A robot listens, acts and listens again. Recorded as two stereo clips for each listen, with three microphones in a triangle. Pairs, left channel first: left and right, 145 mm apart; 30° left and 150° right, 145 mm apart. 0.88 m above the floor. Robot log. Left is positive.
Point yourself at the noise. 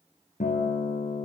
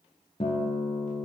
note: The guitar: 75° left.
cmd yaw +75
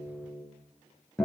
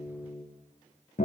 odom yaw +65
end: Found it: a guitar, straight ahead.